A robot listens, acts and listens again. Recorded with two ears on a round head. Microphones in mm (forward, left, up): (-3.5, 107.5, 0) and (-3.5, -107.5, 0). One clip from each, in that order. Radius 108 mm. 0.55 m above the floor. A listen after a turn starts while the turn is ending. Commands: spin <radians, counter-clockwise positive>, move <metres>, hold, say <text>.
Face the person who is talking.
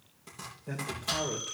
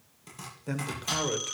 spin -0.79
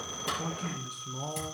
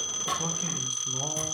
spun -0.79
spin -0.17
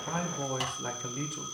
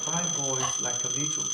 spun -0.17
say Found it: a man speaking, straight ahead, 2 to 4 m away.